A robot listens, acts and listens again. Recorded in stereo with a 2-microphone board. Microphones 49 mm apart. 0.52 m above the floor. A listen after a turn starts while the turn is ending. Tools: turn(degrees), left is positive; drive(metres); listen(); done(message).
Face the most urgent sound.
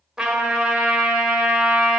listen()
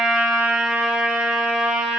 listen()
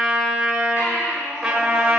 turn(degrees=70)
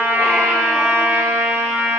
listen()
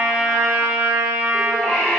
turn(degrees=10)
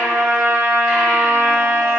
listen()
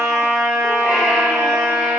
listen()
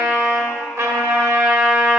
done("Facing where the baby crying came from. I can't hear it now.")